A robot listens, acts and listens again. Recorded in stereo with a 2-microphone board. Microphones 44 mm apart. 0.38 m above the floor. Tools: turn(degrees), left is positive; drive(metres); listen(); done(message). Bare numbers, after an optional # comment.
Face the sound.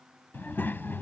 # The child speaking: about 55° left or 125° left.
turn(55)
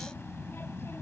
# So it is at 70° left.
turn(70)
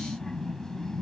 # The child speaking is now 15° left.
turn(15)
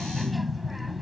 done("Found it: a child speaking, straight ahead.")